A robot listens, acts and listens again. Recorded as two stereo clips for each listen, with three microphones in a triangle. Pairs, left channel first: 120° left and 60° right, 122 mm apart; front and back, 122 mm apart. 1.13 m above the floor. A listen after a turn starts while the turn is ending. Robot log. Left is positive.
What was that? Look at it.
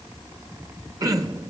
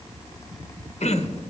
end: Facing the throat clearing, under 1 m away.